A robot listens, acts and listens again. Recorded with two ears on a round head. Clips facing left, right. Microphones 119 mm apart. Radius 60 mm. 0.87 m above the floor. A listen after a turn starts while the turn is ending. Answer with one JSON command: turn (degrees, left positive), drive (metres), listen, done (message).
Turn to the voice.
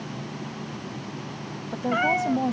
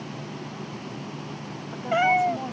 {"turn": 40}
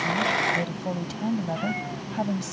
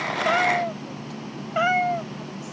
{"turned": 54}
{"turn": 85}
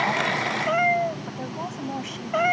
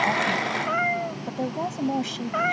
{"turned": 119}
{"turn": -35}
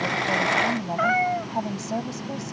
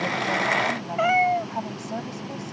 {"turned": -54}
{"turn": 20}
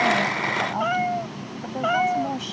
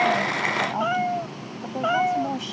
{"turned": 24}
{"done": "Found it: a woman speaking, straight ahead."}